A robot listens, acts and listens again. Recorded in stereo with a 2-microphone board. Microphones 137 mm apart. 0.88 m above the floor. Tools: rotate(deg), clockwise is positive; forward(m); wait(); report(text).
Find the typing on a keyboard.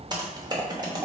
rotate(30)
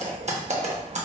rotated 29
rotate(120)
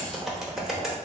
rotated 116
report("Found it: typing on a keyboard, straight ahead, under 1 m away.")